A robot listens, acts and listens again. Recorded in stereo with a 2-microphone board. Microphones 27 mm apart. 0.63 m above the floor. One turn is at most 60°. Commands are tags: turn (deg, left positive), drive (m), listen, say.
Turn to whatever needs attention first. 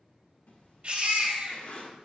<turn deg="-40"/>
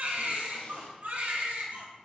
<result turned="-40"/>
<turn deg="-60"/>
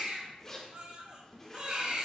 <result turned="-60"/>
<turn deg="-45"/>
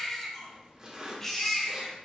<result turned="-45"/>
<say>Found it: a baby crying, straight ahead.</say>